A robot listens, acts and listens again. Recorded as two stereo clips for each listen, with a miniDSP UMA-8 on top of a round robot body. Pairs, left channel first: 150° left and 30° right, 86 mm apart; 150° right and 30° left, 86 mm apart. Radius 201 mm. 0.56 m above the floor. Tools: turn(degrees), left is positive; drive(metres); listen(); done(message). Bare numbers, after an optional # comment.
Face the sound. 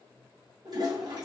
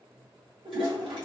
# The toilet flushing: 10° left.
turn(10)
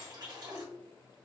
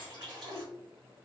done("Facing the toilet flushing.")